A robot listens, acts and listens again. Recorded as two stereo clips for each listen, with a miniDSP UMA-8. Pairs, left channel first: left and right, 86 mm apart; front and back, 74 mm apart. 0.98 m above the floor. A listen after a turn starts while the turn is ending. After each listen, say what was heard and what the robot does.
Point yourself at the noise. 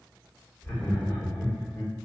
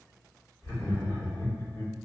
The laughter: 20° left. Turn 20° left.
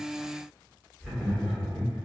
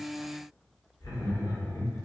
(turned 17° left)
Found it: laughter, straight ahead.